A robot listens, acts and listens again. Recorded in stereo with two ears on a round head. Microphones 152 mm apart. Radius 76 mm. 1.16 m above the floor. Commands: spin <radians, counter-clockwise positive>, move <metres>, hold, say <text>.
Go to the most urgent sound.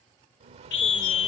spin 1.31
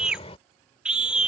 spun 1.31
move 1.0
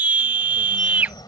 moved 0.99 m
spin -0.17
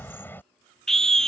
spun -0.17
move 1.0
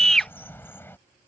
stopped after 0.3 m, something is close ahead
say I am next to the scream.